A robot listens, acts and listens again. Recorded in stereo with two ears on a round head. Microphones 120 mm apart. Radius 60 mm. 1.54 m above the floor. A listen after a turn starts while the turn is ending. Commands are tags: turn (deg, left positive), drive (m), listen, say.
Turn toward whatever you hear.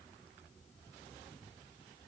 <listen/>
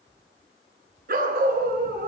<turn deg="-70"/>
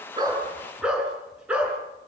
<turn deg="-10"/>
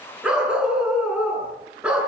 <turn deg="-10"/>
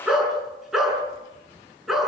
<say>Found it: a dog barking, straight ahead.</say>